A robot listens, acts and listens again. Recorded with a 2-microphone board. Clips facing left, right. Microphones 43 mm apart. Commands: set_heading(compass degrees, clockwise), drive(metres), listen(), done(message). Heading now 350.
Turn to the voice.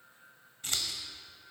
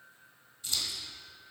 listen()
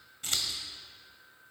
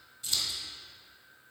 listen()
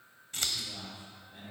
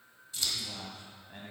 set_heading(50)
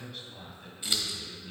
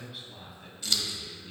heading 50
done("Facing the man speaking, 2 to 4 m away.")